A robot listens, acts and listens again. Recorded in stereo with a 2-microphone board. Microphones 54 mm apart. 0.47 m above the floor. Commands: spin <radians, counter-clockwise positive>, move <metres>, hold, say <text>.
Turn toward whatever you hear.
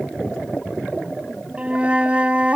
spin -0.44
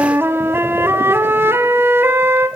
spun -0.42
spin -2.27
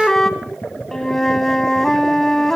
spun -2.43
spin 0.17
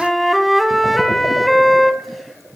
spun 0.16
say Found it: a flute, straight ahead.